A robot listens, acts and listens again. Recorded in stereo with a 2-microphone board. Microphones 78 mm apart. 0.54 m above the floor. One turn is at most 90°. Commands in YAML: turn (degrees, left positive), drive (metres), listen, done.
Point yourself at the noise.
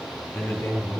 turn: 30
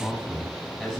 done: "Facing the man speaking, over 4 m away."